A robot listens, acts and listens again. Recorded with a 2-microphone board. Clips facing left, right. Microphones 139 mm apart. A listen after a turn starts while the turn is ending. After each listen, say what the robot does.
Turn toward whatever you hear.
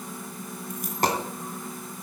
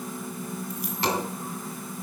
Turn 50° left.
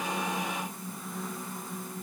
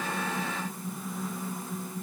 Keep listening.
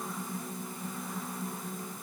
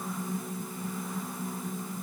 I heard a dropped coin, but can't make it out now. It was about straight ahead or 80° left.